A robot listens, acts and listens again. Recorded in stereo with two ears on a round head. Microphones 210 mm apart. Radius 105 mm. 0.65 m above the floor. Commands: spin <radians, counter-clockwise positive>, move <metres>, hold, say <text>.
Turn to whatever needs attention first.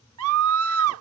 spin -1.22
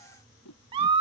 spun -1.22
spin -0.44
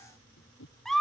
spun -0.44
say Facing the scream.